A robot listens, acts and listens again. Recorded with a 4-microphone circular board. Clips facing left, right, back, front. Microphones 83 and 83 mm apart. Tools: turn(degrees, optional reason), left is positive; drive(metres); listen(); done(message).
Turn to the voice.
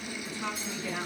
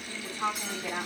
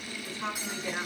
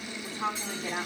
turn(degrees=-55, reason="The woman speaking: 55° right.")
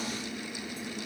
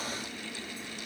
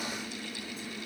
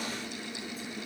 listen()
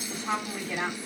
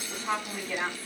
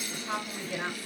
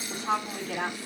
done("Found it: a woman speaking, straight ahead, over 4 m away.")